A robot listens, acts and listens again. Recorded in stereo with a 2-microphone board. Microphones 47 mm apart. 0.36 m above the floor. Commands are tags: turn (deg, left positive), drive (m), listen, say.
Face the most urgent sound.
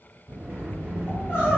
<turn deg="40"/>
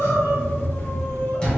<turn deg="95"/>
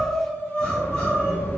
<turn deg="30"/>
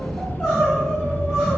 <say>Found it: crying, straight ahead.</say>